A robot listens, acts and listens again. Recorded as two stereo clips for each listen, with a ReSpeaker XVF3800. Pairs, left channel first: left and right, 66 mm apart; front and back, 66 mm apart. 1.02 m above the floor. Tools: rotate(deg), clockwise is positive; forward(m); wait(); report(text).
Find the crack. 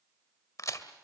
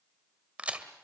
rotate(-115)
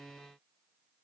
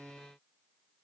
report("I heard a crack from this way, but can't make it out now.")